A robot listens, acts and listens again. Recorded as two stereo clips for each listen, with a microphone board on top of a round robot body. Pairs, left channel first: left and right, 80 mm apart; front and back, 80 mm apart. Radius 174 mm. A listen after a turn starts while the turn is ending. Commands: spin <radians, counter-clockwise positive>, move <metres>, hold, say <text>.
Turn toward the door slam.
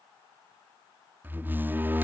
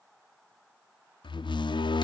spin -0.35
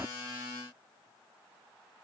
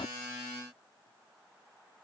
say I heard a door slam from this way, but can't make it out now.